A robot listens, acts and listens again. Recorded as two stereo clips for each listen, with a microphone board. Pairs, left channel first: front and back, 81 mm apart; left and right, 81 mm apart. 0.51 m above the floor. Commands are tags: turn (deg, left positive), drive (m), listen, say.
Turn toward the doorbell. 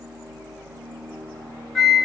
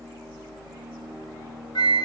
<listen/>
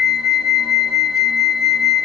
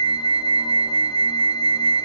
<listen/>
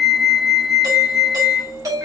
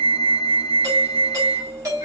<turn deg="-140"/>
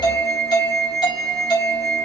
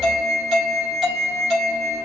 <turn deg="-10"/>
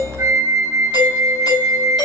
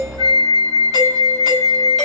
<say>Facing the doorbell.</say>